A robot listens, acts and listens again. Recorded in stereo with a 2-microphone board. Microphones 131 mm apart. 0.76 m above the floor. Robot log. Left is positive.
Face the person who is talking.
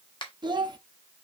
note: The child speaking: about 40° right or 140° right.
cmd yaw -40
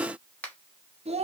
note: So it is at 95° right.
cmd yaw -95
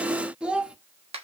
note: The child speaking is now 10° right.
cmd yaw -10
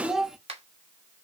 end: Facing the child speaking, under 1 m away.